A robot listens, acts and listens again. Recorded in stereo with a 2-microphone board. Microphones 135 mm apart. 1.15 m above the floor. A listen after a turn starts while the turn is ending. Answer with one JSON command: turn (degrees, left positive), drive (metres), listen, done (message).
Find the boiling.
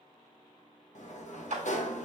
{"listen": true}
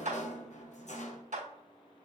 {"listen": true}
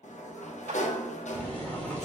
{"turn": 30}
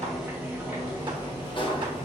{"turn": -15}
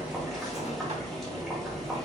{"done": "Facing the boiling, 2 to 4 m away."}